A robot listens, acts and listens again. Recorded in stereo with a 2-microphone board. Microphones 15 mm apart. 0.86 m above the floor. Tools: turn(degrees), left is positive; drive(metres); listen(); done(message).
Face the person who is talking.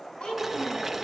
turn(degrees=90)
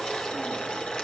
listen()
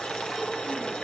listen()
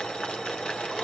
done("Facing where the child speaking came from. I can't hear it now.")